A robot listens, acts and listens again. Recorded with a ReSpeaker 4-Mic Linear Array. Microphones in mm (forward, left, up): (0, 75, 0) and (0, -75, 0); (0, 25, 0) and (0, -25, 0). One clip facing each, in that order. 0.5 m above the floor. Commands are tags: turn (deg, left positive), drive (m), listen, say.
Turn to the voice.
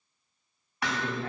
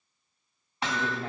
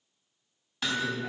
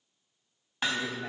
<turn deg="-25"/>
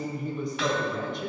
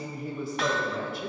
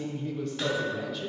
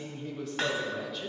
<say>Facing the woman speaking.</say>